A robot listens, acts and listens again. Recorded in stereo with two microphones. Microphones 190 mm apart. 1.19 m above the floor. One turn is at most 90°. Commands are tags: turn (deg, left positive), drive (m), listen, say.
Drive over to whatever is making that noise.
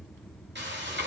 <turn deg="-70"/>
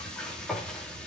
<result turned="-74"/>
<drive m="1.0"/>
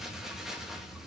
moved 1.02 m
<drive m="1.0"/>
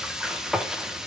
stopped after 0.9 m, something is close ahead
<say>Arrived at the frying, straight ahead.</say>